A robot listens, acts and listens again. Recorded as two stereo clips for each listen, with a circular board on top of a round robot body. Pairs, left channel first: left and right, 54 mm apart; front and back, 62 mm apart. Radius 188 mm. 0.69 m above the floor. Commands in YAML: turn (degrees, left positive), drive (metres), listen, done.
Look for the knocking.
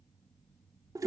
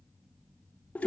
listen: true
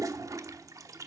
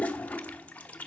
listen: true
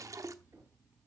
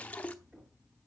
turn: -105
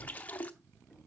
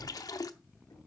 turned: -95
turn: -10
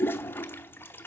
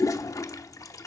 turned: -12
listen: true
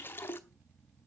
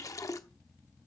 done: "Facing where the knocking came from. I can't hear it now."